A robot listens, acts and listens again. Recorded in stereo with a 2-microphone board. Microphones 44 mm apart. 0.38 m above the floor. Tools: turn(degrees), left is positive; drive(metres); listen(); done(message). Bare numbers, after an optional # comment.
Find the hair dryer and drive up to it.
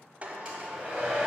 # The hair dryer: about 25° right or 155° right.
turn(-25)
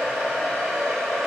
drive(1.0)
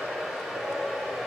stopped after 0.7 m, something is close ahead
done("I am next to the hair dryer.")